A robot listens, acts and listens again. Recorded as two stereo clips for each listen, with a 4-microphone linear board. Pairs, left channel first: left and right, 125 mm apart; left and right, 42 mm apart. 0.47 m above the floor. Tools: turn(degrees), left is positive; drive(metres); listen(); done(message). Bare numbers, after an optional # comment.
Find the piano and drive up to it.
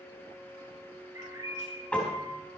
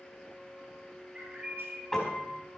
turn(30)
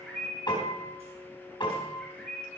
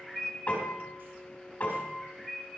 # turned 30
# So it is at 140° left.
turn(140)
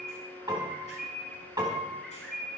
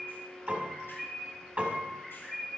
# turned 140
# The piano is now 35° right.
turn(-35)
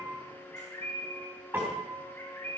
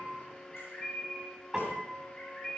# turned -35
# The piano is now 20° right.
turn(-20)
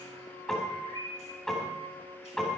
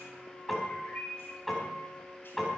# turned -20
drive(1.0)
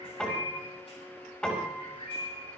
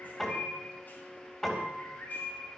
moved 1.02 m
# The piano is now 10° left.
turn(10)
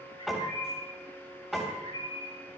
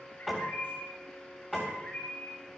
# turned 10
drive(1.0)
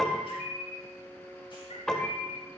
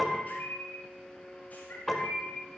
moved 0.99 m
drive(1.0)
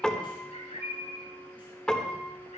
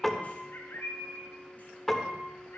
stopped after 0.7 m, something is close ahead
# The piano is now 10° left.
turn(10)
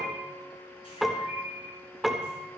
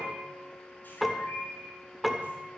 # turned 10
done("Arrived at the piano, straight ahead.")